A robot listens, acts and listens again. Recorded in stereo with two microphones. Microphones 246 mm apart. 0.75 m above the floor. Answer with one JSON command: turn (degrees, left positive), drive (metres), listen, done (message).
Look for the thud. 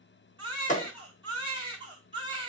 {"turn": 30}
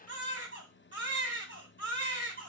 {"listen": true}
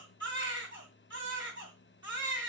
{"done": "I heard a thud, but can't make it out now. It was about straight ahead or 120° left."}